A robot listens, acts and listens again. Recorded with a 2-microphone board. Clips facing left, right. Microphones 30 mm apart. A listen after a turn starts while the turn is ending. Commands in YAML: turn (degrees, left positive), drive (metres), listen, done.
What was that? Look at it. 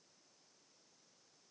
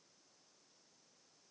listen: true
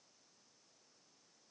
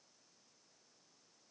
listen: true
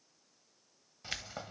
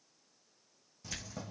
turn: 40
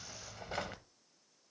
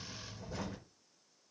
turn: 100
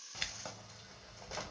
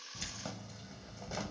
done: "Facing the keys jangling, under 1 m away."